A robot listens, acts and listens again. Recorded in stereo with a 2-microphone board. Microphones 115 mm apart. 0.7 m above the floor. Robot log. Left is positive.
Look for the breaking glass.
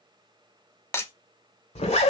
note: The breaking glass: about 20° left or 160° left.
cmd yaw +20
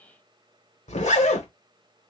cmd idle
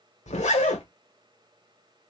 end: I heard breaking glass, but can't make it out now. It was about straight ahead or 140° left.